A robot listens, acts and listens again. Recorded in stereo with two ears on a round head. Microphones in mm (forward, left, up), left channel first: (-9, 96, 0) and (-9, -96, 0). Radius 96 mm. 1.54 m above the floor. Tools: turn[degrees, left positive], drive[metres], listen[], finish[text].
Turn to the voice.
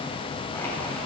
Action: listen[]
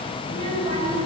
Thought: The child speaking: about 30° right or 150° right.
Action: turn[-30]
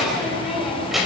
Action: finish[Facing the child speaking, over 4 m away.]